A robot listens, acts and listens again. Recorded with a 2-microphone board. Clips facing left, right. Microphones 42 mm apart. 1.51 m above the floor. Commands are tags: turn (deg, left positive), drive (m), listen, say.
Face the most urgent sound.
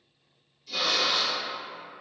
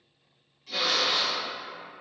<listen/>
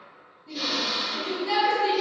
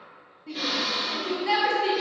<turn deg="-90"/>
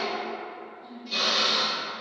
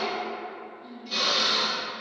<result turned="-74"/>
<turn deg="-15"/>
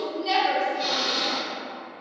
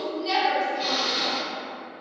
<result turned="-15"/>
<say>Facing the shout, 1 to 2 m away.</say>